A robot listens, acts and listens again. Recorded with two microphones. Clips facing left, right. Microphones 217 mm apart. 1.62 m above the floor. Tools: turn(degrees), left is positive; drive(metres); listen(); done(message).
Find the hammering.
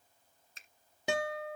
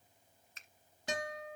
listen()
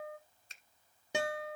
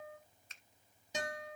listen()
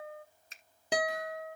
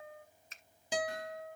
done("I can't make out hammering, only a finger snap and a guitar.")